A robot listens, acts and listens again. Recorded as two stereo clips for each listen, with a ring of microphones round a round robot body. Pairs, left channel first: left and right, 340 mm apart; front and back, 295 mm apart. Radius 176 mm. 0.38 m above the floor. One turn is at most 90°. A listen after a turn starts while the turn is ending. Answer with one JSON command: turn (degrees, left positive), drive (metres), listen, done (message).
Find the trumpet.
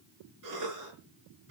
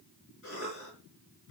{"listen": true}
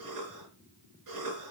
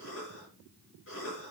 {"listen": true}
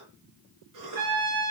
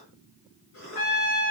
{"turn": -25}
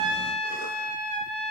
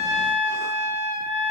{"done": "Found it: a trumpet, straight ahead, over 4 m away."}